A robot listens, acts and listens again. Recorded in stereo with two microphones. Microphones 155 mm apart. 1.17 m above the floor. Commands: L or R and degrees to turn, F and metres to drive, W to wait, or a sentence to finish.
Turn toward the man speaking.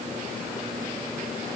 W
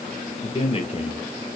L45
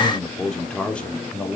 L10
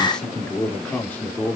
L15
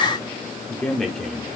Facing the man speaking.